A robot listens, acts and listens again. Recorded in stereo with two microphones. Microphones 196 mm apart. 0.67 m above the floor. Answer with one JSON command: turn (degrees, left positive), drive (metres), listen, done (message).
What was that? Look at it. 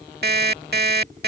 {"turn": -60}
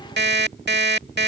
{"turn": -65}
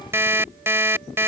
{"turn": -15}
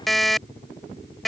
{"done": "Facing the alarm clock."}